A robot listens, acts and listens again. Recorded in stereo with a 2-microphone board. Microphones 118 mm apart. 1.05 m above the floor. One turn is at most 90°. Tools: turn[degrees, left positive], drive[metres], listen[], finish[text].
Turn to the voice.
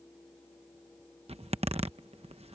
Action: listen[]
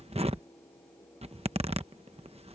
Action: listen[]
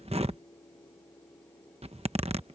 Action: finish[I can't make out anyone speaking to turn to.]